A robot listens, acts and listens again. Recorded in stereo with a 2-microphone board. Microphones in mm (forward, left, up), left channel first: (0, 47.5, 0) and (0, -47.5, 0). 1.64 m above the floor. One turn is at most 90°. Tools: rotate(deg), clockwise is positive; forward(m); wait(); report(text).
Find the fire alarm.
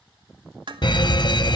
rotate(-50)
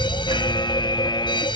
rotate(-65)
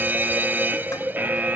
rotate(20)
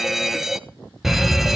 report("Facing the fire alarm.")